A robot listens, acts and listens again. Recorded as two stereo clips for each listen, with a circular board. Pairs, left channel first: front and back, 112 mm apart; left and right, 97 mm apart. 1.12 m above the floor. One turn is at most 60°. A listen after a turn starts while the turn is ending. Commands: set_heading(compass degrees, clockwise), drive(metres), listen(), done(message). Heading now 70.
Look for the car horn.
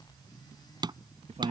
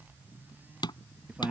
listen()
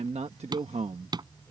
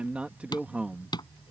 listen()
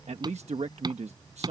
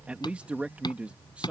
done("I can't make out a car horn, only hammering and a man speaking.")